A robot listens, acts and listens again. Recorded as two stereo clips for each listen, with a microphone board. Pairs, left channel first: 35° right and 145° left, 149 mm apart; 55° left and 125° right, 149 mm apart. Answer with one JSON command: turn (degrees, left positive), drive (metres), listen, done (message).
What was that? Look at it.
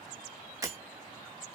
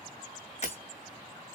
{"turn": 80}
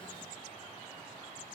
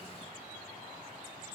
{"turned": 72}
{"turn": 10}
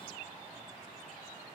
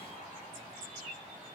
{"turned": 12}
{"done": "I heard breaking glass from this way, but can't make it out now."}